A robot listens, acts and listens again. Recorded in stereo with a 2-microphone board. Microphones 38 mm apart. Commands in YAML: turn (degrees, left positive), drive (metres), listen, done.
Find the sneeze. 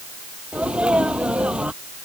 turn: -25
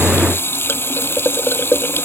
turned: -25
listen: true
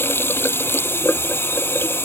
done: "I heard a sneeze, but can't make it out now. It was about straight ahead or 130° right."